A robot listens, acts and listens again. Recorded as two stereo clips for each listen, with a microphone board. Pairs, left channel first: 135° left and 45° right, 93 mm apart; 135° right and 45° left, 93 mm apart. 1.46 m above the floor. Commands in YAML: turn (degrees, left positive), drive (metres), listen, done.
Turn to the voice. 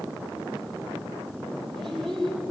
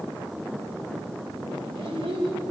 turn: 50
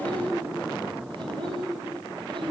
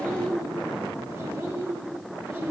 turn: -15
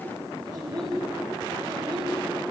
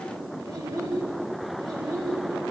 done: "Facing the child speaking."